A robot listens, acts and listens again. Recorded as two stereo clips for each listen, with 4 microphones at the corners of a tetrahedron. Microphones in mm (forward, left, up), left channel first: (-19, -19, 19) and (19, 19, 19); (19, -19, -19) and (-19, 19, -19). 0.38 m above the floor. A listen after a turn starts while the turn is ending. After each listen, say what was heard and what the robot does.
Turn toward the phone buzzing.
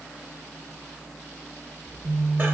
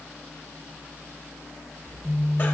The phone buzzing: 95° left. Turn 95° left.
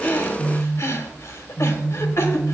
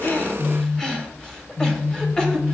The phone buzzing is now 25° right. Turn 25° right.
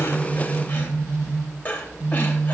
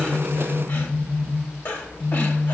The phone buzzing is now 10° left. Turn 10° left.
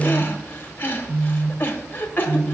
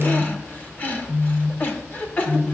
Facing the phone buzzing.